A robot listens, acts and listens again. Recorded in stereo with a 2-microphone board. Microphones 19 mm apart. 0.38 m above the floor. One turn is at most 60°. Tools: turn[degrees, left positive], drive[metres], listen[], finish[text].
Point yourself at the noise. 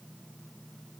Action: listen[]
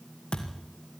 Thought: The thud: about 60° left or 120° left.
Action: turn[60]
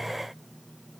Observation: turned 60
Action: listen[]
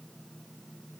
Action: finish[I heard a thud, but can't make it out now. It was about straight ahead or 60° left.]